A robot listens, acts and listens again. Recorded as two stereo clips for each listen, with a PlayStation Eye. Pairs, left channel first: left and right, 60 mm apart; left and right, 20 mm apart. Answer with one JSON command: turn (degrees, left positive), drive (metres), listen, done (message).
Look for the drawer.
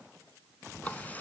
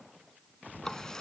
{"listen": true}
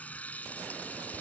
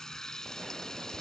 {"listen": true}
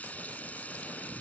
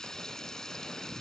{"done": "I can't make out a drawer, only a running tap."}